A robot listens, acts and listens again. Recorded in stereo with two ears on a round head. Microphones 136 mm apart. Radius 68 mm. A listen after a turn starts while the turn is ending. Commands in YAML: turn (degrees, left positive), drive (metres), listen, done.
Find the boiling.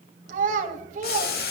turn: 75
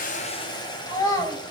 turn: 30
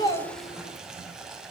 done: "Found it: boiling, straight ahead."